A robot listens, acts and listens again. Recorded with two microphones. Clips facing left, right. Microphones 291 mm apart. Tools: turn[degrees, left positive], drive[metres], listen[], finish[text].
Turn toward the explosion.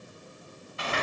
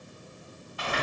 Action: listen[]
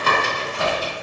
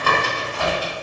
Action: listen[]
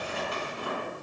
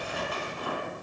Action: finish[I can't make out an explosion to turn to.]